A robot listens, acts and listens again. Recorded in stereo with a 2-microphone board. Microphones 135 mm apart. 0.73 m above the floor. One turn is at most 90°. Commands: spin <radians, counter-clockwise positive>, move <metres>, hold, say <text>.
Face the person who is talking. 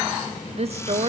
spin -0.87
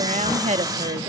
spin -1.22
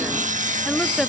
say Found it: a woman speaking, straight ahead, under 1 m away.